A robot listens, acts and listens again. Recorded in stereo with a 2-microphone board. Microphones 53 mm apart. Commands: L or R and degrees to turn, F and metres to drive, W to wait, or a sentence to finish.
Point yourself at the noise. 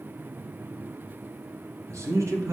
R75
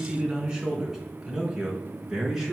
Found it: a man speaking, straight ahead, 2 to 4 m away.